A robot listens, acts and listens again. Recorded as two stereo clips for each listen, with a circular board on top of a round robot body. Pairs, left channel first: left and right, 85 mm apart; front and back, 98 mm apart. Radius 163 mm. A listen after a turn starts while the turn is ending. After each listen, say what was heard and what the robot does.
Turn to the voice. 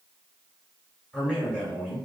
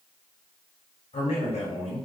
The man speaking: 10° left. Turn 10° left.
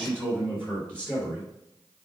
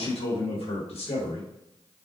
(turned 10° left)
The man speaking is now 10° left. Turn 10° left.
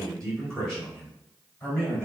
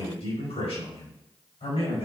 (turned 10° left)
The man speaking is now 10° left. Turn 10° left.
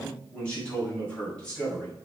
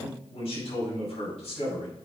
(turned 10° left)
The man speaking is now 10° left. Turn 10° left.
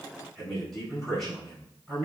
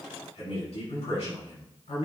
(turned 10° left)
Found it: a man speaking, straight ahead, over 4 m away.